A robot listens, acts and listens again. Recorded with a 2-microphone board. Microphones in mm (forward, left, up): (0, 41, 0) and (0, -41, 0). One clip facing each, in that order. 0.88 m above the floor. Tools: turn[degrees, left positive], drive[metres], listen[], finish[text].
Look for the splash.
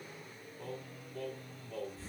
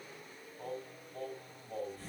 Action: listen[]
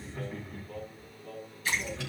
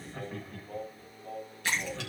Action: turn[-90]
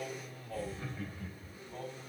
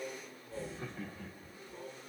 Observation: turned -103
Thought: Nothing new. It was at 15° left.
Action: turn[15]
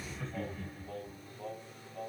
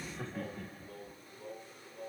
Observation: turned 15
Action: finish[Facing where the splash came from. I can't hear it now.]